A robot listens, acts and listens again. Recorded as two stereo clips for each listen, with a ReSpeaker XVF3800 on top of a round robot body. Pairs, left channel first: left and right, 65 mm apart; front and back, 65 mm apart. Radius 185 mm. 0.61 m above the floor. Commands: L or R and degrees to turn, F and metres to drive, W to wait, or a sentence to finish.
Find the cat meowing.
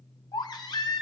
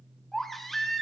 W
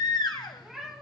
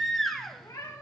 Found it: a cat meowing, straight ahead, 2 to 4 m away.